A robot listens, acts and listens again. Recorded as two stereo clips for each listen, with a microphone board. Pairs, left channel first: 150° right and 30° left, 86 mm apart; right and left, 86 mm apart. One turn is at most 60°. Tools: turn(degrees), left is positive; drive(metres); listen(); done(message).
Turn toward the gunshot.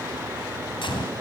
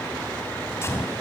turn(degrees=-60)
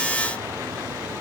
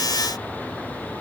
turn(degrees=-60)
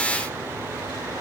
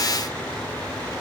turn(degrees=-30)
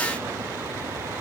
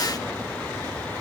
done("Facing where the gunshot came from. I can't hear it now.")